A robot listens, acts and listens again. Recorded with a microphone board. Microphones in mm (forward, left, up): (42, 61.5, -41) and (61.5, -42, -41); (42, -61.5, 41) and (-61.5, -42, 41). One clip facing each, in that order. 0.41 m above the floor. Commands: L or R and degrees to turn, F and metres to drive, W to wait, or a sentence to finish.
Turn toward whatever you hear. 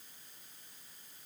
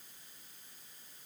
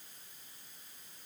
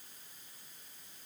W
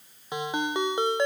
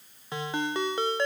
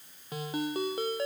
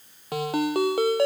L175
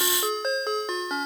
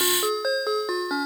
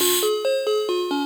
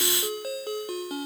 L10
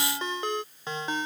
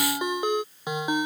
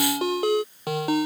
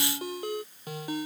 Found it: a ringtone, straight ahead.